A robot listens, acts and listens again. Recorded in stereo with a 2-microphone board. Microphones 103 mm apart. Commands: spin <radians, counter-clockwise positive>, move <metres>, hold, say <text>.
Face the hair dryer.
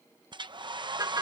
spin -0.87
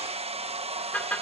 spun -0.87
spin -1.40
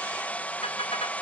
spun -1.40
spin 0.26
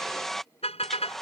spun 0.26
say Found it: a hair dryer, straight ahead.